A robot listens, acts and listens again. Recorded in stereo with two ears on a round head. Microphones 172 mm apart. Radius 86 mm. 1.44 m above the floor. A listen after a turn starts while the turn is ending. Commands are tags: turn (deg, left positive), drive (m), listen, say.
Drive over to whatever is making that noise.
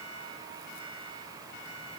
<listen/>
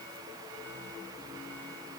<listen/>
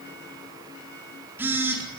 <turn deg="-30"/>
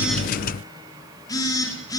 <turn deg="20"/>
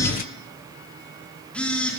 <drive m="1.0"/>
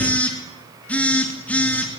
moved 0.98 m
<drive m="1.0"/>
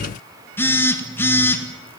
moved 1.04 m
<turn deg="10"/>
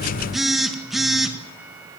<drive m="1.0"/>
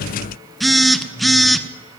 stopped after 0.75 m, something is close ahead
<say>Arrived at the phone buzzing, straight ahead.</say>